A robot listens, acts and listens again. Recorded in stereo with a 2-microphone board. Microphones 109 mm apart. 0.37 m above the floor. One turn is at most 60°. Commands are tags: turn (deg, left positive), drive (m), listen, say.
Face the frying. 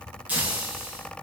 <turn deg="-15"/>
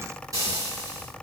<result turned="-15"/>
<turn deg="-60"/>
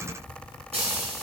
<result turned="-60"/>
<turn deg="-60"/>
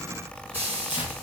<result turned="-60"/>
<turn deg="-20"/>
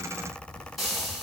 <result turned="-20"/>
<say>Found it: frying, straight ahead.</say>